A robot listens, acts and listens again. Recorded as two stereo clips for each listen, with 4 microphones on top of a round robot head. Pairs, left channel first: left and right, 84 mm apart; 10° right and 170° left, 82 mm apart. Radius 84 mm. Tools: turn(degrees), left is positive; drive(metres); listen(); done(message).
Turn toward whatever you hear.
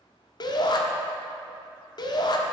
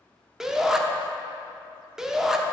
turn(degrees=90)
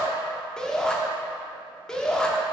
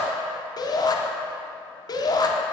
turn(degrees=10)
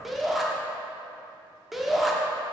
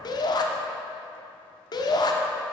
done("Facing the shout, 1 to 2 m away.")